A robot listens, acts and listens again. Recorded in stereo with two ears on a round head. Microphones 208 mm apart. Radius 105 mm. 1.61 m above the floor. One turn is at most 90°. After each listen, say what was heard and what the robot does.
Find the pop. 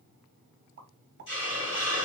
The pop: about 45° right or 135° right. Turn 45° right.
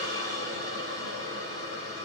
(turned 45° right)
Keep listening.
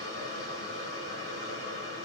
I heard a pop, but can't make it out now. It was about straight ahead or 90° right.